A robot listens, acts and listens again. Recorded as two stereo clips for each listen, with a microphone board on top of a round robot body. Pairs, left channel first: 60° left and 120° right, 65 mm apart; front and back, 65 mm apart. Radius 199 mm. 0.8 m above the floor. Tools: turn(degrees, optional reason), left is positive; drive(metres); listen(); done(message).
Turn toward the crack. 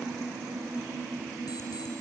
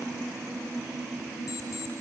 listen()
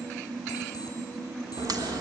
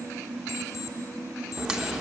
turn(degrees=-100, reason="The crack: 100° right.")
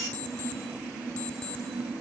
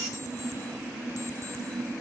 done("Facing where the crack came from. I can't hear it now.")